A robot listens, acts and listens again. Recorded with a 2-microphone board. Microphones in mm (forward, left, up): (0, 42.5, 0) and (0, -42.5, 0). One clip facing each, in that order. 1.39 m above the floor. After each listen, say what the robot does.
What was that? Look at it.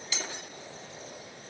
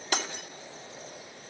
Turn 55° right.
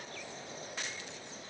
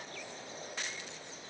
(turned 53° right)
Keep listening.
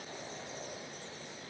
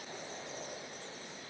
I heard breaking glass, but can't make it out now. It was about straight ahead or 75° right.